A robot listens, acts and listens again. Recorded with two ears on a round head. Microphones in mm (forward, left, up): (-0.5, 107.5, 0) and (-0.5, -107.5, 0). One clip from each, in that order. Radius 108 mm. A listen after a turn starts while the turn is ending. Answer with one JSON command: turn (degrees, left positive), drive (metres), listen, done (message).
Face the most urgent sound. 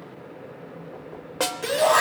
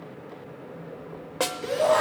{"turn": 45}
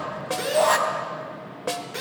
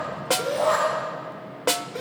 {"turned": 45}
{"turn": 85}
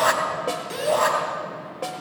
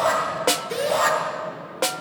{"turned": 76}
{"turn": 10}
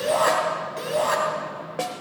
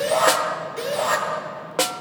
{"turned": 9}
{"done": "Facing the shout, 2 to 4 m away."}